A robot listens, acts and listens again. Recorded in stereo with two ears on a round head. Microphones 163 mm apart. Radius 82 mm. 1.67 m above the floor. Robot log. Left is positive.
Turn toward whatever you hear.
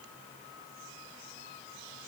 cmd idle
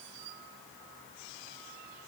cmd idle
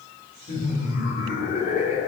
note: The laughter: about 40° left or 140° left.
cmd yaw +40
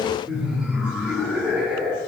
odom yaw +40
end: Facing the laughter, over 4 m away.